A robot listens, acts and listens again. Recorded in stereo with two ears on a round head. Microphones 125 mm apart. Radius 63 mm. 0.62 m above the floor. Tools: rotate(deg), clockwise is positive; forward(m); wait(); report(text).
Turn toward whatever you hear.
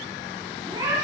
rotate(35)
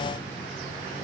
wait()
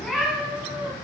report("Facing the cat meowing, 2 to 4 m away.")